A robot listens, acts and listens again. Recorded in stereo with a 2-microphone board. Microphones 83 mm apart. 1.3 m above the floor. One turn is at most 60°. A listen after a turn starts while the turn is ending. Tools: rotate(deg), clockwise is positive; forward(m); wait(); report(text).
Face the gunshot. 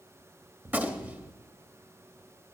rotate(20)
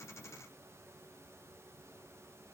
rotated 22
wait()
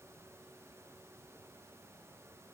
report("I heard a gunshot, but can't make it out now. It was about straight ahead or 135° right.")